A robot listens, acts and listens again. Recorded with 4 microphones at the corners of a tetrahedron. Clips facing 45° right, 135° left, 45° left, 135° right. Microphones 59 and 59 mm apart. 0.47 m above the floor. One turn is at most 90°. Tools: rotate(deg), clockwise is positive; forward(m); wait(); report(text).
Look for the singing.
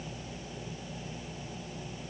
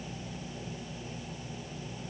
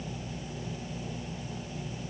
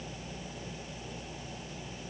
wait()
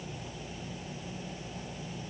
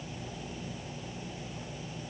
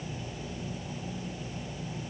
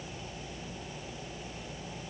wait()
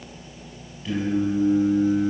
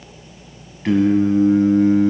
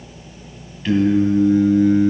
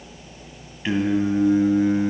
rotate(-90)
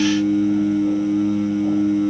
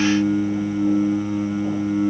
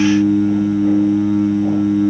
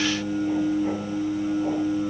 rotate(-65)
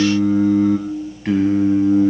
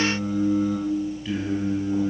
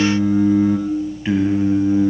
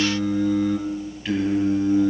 rotate(20)
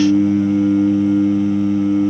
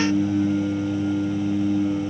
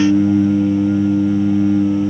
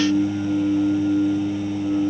report("Facing the singing.")